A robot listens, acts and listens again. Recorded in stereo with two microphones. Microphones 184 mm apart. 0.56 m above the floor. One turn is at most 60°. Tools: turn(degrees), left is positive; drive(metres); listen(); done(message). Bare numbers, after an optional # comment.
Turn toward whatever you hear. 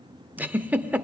turn(-30)
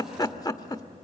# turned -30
# So it is at 25° left.
turn(25)
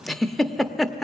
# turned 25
done("Facing the giggle.")